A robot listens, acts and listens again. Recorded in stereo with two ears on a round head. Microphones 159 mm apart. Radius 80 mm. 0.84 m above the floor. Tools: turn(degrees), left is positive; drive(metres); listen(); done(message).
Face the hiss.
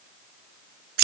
listen()
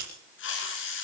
turn(degrees=75)
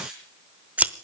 listen()
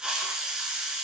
done("Facing the hiss.")